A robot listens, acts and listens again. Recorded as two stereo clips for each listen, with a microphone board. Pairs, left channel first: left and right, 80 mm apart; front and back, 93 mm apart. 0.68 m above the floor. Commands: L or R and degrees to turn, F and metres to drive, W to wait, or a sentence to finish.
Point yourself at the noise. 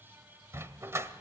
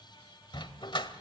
R35
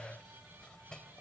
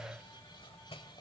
W
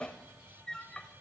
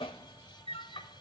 L10
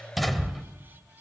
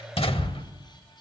Facing the dog barking, 1 to 2 m away.